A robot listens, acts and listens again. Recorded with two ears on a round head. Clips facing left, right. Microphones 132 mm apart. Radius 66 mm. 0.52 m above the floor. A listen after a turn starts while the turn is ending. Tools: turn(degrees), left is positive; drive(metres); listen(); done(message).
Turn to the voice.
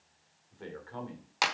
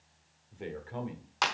turn(degrees=-20)
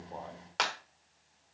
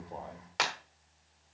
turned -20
listen()
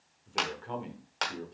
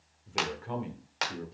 done("Found it: a man speaking, straight ahead.")